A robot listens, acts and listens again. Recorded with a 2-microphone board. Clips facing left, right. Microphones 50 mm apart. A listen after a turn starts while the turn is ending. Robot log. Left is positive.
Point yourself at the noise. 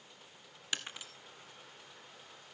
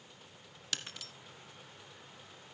note: The breaking glass: about 20° left or 160° left.
cmd yaw +20
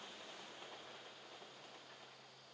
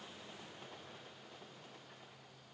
cmd idle
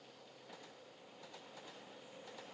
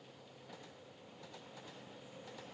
end: I heard breaking glass, but can't make it out now. It was about straight ahead or 140° left.